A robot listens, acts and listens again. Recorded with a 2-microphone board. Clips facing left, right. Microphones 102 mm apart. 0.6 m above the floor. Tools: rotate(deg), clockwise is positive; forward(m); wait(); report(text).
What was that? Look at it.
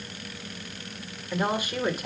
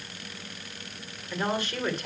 rotate(-30)
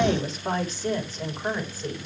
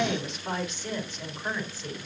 rotate(-140)
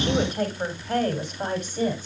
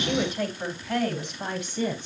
rotate(-45)
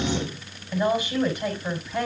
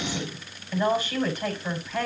rotate(-15)
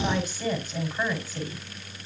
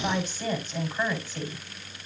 report("Facing the woman speaking, over 4 m away.")